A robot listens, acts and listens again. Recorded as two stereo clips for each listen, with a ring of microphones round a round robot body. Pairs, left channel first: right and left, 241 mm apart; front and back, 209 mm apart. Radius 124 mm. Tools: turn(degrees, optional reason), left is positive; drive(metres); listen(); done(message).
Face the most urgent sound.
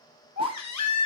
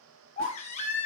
turn(degrees=-65, reason="The baby crying: 65° right.")
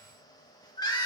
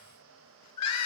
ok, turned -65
turn(degrees=-15, reason="The baby crying is now 15° right.")
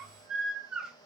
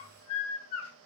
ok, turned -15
done("Found it: a baby crying, straight ahead, 1 to 2 m away.")